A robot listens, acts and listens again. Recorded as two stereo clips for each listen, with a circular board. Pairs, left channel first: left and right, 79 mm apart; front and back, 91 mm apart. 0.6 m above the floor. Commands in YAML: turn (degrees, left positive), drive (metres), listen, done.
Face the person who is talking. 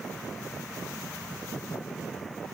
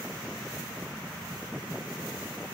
listen: true
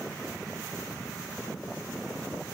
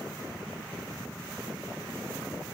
listen: true
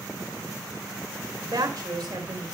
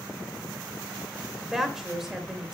turn: -95
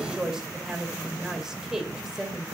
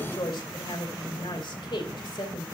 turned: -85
turn: -10
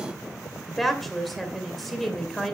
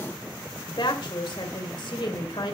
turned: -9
done: "Facing the woman speaking."